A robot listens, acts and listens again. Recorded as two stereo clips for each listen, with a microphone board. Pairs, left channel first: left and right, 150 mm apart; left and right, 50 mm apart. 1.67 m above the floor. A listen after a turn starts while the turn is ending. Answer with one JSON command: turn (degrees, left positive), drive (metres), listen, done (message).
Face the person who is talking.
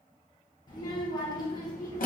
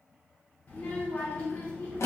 {"turn": 30}
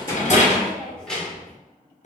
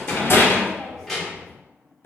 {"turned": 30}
{"done": "Found it: a child speaking, straight ahead, under 1 m away."}